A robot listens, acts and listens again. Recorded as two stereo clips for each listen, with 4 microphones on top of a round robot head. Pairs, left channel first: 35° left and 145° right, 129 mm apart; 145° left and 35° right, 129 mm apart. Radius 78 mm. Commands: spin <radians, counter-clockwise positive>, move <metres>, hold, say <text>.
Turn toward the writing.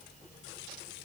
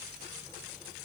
hold
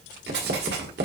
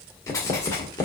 spin -2.53
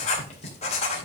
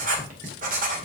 spin -0.17
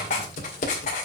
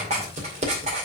say Facing the writing, 2 to 4 m away.